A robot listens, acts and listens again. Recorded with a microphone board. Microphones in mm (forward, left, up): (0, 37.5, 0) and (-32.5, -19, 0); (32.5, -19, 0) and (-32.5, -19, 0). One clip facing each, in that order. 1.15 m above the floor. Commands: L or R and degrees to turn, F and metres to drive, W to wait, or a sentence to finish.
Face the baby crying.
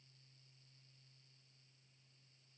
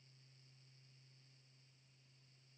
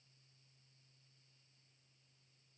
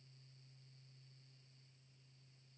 W
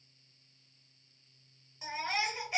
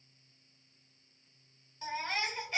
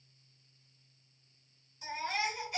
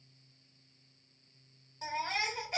L140
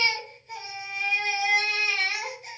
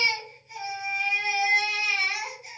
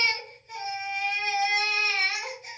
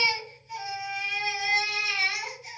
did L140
L35
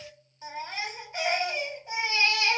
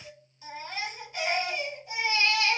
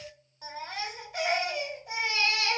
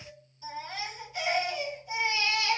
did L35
Found it: a baby crying, straight ahead, 1 to 2 m away.